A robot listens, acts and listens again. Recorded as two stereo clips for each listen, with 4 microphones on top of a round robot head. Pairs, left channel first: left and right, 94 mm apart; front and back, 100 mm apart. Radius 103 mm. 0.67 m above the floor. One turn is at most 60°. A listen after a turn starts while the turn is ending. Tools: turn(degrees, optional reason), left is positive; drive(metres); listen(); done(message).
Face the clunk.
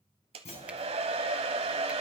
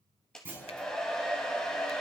turn(degrees=60, reason="The clunk: 110° left.")
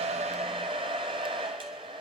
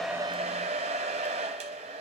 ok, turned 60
turn(degrees=50, reason="Nothing new. It was at 50° left.")
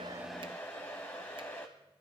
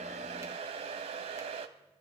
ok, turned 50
done("Facing where the clunk came from. I can't hear it now.")